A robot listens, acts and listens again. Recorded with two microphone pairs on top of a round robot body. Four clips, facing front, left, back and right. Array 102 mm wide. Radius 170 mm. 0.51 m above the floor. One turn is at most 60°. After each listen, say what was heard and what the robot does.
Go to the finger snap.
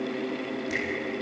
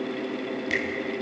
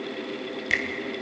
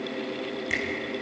The finger snap: straight behind. Turn 60° left.
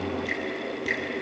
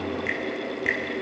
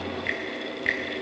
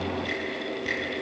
The finger snap is now 130° left. Turn 60° left.
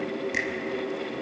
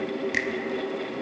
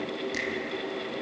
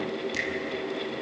The finger snap is now 70° left. Turn 60° left.
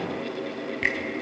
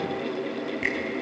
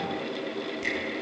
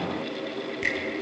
The finger snap is now 10° left. Turn 10° left.
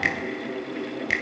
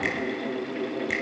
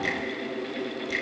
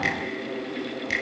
Drive 1.0 m forward.
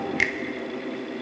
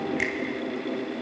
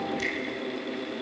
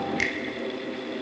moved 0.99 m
Drive 1.0 m forward.
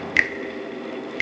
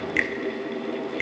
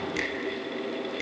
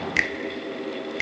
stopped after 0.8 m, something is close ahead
The finger snap is now 10° right. Turn 10° right.
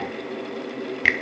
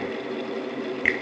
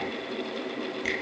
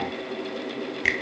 Arrived at the finger snap, straight ahead.